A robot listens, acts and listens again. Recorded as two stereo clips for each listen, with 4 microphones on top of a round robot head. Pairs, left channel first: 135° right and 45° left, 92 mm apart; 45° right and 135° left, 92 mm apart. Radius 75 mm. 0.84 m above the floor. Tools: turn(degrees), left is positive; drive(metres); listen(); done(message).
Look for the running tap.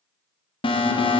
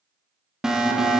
listen()
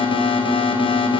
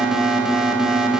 listen()
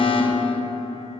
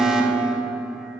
done("I can't make out a running tap, only an alarm.")